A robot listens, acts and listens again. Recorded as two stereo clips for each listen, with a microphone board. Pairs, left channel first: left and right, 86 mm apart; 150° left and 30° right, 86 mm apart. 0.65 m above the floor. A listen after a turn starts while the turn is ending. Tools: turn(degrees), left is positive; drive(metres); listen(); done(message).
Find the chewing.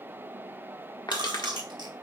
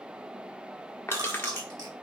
turn(degrees=-65)
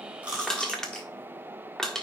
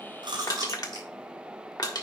listen()
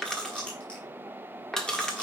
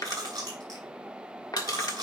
turn(degrees=15)
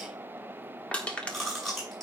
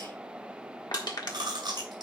done("Found it: chewing, straight ahead.")